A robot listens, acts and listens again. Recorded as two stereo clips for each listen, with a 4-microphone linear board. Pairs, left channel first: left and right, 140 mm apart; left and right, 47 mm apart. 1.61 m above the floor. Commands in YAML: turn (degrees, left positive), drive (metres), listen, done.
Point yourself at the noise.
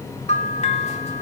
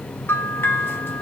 turn: 50
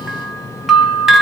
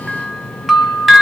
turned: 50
done: "Facing the bell, under 1 m away."